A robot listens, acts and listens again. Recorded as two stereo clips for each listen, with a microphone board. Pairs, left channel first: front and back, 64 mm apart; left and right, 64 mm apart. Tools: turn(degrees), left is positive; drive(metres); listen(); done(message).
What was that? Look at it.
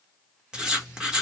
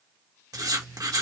turn(degrees=-105)
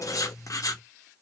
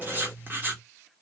turn(degrees=-35)
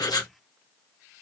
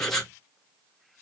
done("Facing the writing, 1 to 2 m away.")